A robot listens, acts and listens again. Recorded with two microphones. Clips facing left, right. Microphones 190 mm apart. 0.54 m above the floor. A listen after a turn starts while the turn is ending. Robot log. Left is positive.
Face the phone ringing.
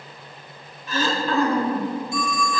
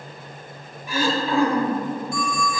note: The phone ringing: about 20° left or 160° left.
cmd yaw +20
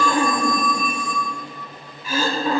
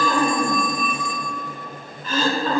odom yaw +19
note: So it is at 140° left.
cmd yaw +140
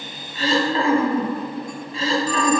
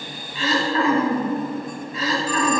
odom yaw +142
cmd idle
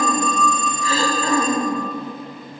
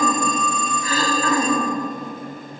end: Facing the phone ringing.